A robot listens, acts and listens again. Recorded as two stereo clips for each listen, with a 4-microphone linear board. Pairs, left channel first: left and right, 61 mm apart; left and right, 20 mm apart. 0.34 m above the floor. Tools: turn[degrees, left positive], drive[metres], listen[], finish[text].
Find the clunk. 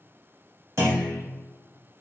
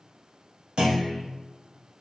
Thought: The clunk: about 40° right or 140° right.
Action: turn[-40]
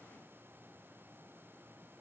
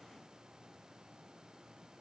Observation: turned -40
Action: listen[]
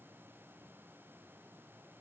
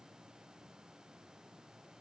Action: finish[I heard a clunk, but can't make it out now. It was about straight ahead or 100° right.]